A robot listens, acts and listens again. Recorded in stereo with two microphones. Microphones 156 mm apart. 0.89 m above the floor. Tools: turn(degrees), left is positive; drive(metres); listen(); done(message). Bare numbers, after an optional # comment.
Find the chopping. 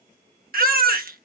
listen()
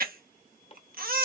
# The chopping: about 40° left or 140° left.
turn(40)
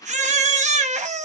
listen()
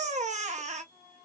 listen()
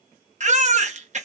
done("I heard chopping, but can't make it out now. It was about straight ahead or 100° left.")